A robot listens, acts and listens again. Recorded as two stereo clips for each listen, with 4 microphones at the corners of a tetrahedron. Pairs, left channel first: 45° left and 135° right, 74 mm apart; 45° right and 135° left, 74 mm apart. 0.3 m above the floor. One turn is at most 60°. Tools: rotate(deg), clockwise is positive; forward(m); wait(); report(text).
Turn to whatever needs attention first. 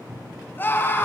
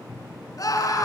rotate(15)
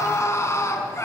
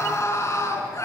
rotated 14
report("Found it: a scream, straight ahead.")